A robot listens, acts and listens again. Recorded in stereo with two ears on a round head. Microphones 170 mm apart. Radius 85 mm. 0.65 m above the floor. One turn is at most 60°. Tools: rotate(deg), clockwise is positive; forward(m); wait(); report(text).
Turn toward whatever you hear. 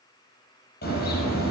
rotate(-55)
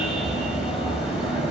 report("Found it: a car horn, straight ahead, over 4 m away.")